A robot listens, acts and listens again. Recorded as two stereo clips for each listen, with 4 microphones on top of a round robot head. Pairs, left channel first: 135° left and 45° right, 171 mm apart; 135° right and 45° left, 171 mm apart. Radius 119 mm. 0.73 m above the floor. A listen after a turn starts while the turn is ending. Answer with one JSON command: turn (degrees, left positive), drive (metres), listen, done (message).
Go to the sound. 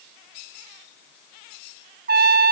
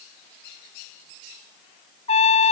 {"turn": -80}
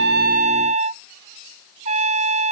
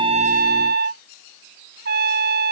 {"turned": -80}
{"turn": 10}
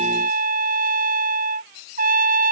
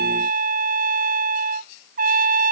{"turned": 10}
{"drive": 1.0}
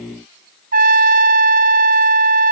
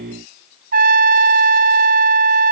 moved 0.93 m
{"drive": 1.0}
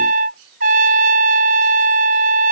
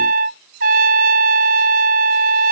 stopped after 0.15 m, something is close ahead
{"done": "Arrived at the trumpet, straight ahead."}